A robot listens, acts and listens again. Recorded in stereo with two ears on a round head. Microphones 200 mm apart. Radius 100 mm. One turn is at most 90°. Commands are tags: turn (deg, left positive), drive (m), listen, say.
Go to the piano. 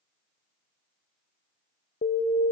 <listen/>
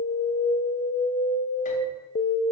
<listen/>
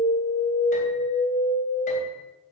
<say>I can't make out a piano to turn to.</say>